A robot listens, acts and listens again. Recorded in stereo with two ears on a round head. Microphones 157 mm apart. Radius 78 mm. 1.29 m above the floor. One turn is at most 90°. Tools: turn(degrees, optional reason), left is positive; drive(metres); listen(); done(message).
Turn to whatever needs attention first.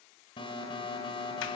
turn(degrees=30, reason="The alarm: about 30° left or 150° left.")
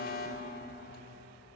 turn(degrees=90, reason="So it is at 120° left.")
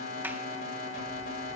turn(degrees=50, reason="The alarm is now 50° left.")
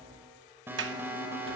turn(degrees=-10, reason="The alarm is now 10° right.")
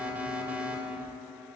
turn(degrees=-10, reason="The alarm is now 10° right.")
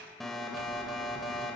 done("Facing the alarm, 2 to 4 m away.")